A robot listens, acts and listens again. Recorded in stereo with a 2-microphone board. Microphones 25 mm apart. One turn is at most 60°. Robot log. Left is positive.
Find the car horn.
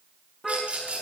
note: The car horn: about 20° right or 160° right.
cmd yaw -20
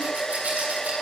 cmd idle
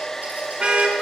note: So it is at 135° right.
cmd yaw -60
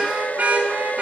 note: The car horn is now 70° right.
cmd yaw -60
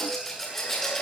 note: Nothing new. It was at 10° right.
cmd yaw -10
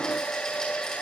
cmd idle
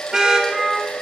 note: The car horn is now 20° right.
cmd yaw -20
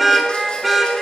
end: Found it: a car horn, straight ahead.